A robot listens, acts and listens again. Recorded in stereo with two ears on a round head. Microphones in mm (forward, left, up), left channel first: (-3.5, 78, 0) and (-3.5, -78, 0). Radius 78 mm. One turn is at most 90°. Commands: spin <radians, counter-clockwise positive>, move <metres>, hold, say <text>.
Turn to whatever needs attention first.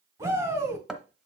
spin -0.26
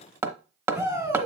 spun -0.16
spin -0.52
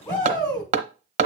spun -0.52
spin 0.35
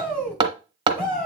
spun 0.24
say Facing the shout.